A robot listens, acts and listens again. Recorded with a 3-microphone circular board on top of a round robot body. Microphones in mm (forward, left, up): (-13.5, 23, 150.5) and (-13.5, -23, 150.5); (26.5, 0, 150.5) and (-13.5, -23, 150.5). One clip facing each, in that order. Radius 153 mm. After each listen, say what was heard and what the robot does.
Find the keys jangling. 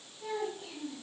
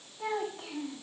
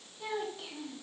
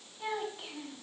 Keep listening.
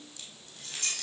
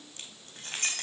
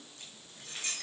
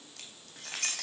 The keys jangling: 140° right. Turn 140° right.
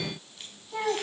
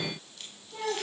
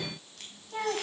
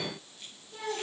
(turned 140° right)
Keep listening.
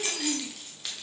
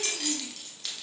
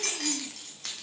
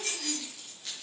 The keys jangling is now 10° left. Turn 10° left.
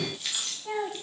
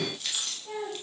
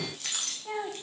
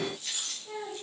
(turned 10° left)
Facing the keys jangling, over 4 m away.